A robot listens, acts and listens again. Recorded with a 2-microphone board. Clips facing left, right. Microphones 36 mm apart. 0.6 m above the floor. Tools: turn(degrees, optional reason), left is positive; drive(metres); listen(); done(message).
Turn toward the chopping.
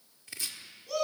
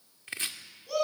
turn(degrees=-45, reason="The chopping: about 45° right or 135° right.")
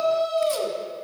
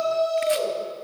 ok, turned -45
listen()
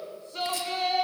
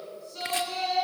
listen()
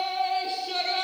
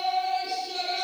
done("I heard chopping, but can't make it out now. It was about straight ahead or 90° right.")